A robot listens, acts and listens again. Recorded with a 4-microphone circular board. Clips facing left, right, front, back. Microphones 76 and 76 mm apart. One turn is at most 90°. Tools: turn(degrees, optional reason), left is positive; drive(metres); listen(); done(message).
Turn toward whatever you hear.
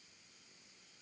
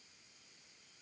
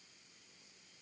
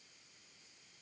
listen()
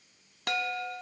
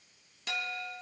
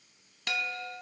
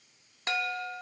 turn(degrees=90, reason="The chime: 120° left.")
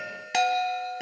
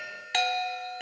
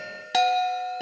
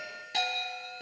done("Found it: a chime, straight ahead.")